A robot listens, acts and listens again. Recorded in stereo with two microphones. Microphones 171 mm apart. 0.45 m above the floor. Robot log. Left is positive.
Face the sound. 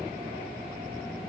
cmd idle
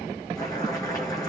note: The boiling: about 20° left or 160° left.
cmd yaw +20
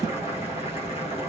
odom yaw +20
note: So it is at 145° left.
cmd yaw +145
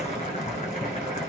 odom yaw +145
note: The boiling is now 45° left.
cmd yaw +45
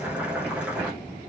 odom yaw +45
end: Facing the boiling, over 4 m away.